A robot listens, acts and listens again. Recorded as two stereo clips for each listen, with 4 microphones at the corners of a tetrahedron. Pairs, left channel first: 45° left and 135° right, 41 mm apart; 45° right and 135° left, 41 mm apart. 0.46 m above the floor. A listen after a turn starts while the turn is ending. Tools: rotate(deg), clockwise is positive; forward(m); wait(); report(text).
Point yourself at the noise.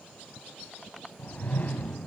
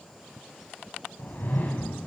report("Facing the whoosh, 2 to 4 m away.")